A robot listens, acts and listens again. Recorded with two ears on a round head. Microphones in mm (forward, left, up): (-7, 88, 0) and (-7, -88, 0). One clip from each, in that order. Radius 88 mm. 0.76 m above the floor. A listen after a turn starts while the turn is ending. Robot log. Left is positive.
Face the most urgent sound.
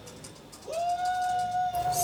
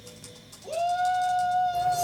note: The shout: about 65° right or 115° right.
cmd yaw -65
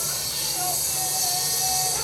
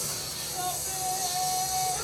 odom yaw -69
cmd idle
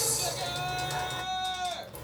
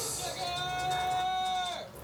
end: Facing the shout.